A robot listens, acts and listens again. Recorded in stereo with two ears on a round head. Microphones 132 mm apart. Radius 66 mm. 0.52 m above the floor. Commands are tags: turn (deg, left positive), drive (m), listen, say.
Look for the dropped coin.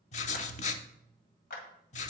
<listen/>
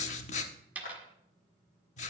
<turn deg="-30"/>
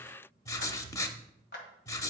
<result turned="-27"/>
<listen/>
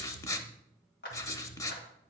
<say>I heard a dropped coin, but can't make it out now. It was about 15° left or 140° right.</say>